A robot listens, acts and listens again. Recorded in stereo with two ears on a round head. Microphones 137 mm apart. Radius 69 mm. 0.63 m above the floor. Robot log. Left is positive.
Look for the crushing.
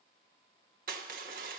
note: The crushing: about 55° right or 125° right.
cmd yaw -55
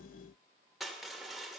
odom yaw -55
end: Facing the crushing.